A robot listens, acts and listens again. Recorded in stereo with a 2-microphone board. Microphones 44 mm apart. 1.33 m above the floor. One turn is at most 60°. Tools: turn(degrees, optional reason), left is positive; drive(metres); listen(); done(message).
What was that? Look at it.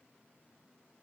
listen()
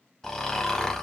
turn(degrees=30)
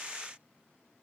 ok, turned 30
listen()
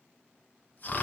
turn(degrees=60, reason="So it is at 140° left.")
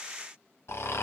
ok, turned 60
turn(degrees=60, reason="The snoring is now 85° left.")
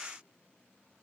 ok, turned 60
turn(degrees=25, reason="Nothing new. It was at 25° left.")
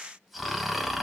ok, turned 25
done("Facing the snoring, under 1 m away.")